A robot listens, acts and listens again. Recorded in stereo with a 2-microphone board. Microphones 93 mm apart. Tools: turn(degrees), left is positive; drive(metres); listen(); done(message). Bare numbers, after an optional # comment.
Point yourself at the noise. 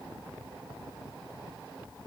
listen()
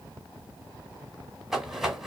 turn(-30)
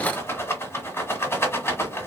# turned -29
# So it is at 25° left.
turn(25)
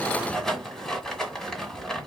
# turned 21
done("Facing the rattle.")